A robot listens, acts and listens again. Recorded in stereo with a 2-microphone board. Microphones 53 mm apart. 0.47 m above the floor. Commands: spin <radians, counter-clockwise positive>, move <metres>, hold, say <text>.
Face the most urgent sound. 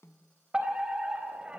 spin -0.35
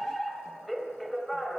say Facing the fire alarm, over 4 m away.